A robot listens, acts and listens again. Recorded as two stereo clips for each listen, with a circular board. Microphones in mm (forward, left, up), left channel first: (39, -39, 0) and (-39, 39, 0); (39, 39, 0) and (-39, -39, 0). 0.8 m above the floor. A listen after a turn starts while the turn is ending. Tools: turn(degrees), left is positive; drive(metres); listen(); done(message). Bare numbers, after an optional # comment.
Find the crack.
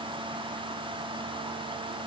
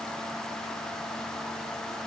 listen()
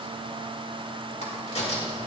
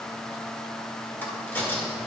# The crack: 25° right.
turn(-25)
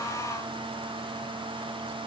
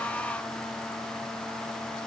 done("Facing where the crack came from. I can't hear it now.")